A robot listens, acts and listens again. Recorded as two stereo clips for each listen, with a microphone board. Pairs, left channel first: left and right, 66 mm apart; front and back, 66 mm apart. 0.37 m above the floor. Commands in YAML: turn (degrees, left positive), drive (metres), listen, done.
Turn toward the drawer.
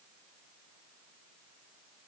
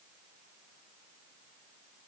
listen: true
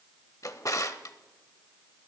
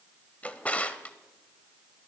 turn: 65
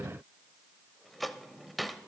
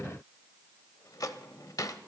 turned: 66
done: "Facing the drawer."